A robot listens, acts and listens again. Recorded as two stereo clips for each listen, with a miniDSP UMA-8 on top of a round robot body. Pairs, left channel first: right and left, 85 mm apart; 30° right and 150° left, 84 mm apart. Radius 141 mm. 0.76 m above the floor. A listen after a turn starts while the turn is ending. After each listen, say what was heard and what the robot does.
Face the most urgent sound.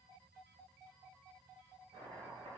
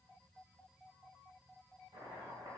Keep listening.
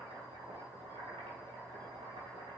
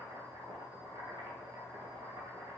Keep listening.
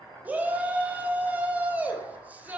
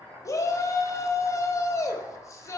The shout: 20° left. Turn 20° left.
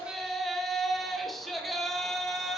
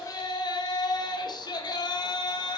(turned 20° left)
Found it: a shout, straight ahead.